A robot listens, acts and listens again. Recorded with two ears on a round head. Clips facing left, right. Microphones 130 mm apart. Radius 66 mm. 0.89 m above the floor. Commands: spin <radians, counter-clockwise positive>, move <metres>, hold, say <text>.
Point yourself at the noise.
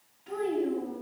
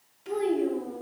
spin -1.57
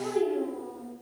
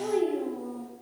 spin -0.35
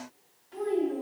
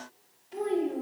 spin -0.44
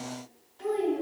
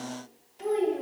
spin -0.44
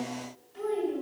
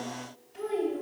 spin -0.26
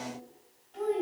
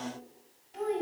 spin -0.17
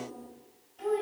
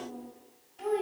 say Found it: a child speaking, straight ahead.